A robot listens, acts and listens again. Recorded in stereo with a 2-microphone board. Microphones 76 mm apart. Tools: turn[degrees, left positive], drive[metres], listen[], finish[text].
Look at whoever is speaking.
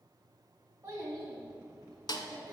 Thought: The child speaking: about 35° right or 145° right.
Action: turn[-35]
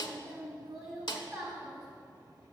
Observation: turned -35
Action: finish[Found it: a child speaking, straight ahead, 1 to 2 m away.]